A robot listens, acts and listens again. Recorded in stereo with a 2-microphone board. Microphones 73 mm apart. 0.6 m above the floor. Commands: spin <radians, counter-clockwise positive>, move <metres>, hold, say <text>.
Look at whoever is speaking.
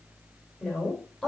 spin 0.52
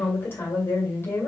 spin 2.53
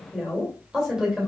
spin -0.17
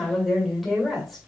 say Facing the woman speaking, 2 to 4 m away.